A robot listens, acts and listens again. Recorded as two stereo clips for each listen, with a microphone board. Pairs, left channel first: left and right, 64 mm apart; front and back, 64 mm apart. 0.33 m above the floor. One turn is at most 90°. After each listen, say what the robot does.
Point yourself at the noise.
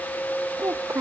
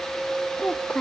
Turn 60° right.
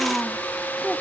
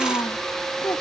Found it: a child speaking, straight ahead.